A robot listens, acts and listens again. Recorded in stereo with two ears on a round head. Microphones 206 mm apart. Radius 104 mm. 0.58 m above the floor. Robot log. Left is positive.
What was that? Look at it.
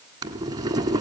note: The boiling: about 20° right or 160° right.
cmd yaw -20
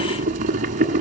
note: So it is at 140° right.
cmd yaw -140
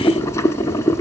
note: The boiling is now 15° left.
cmd yaw +15
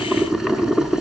end: Facing the boiling.